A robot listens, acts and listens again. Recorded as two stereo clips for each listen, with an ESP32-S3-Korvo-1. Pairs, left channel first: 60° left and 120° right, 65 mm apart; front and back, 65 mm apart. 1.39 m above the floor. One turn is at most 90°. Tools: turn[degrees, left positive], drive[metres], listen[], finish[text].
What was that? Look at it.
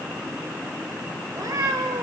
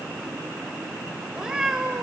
Thought: The cat meowing: 100° right.
Action: turn[-90]
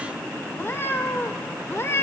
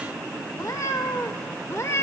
Thought: The cat meowing is now 25° left.
Action: turn[25]
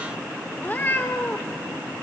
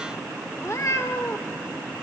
Thought: The cat meowing is now 20° left.
Action: turn[20]
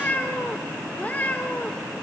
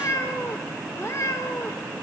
Action: finish[Facing the cat meowing, 1 to 2 m away.]